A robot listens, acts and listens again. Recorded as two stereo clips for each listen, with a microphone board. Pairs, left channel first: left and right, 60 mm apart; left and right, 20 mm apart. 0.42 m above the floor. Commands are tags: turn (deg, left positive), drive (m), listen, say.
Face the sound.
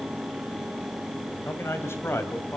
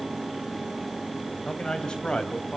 <turn deg="45"/>
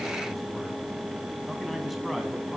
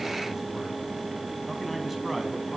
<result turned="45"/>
<listen/>
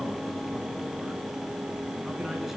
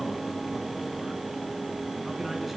<listen/>
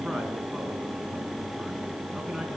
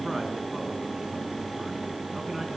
<say>I heard a man speaking, but can't make it out now. It was about straight ahead or 90° left.</say>